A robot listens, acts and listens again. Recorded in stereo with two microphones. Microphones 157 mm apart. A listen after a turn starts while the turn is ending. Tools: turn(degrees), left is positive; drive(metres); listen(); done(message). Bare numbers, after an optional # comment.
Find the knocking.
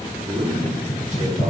# The knocking: about 30° left or 150° left.
turn(30)
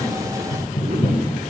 # So it is at 125° left.
turn(125)
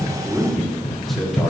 # The knocking is now 20° left.
turn(20)
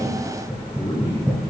done("Found it: knocking, straight ahead, 2 to 4 m away.")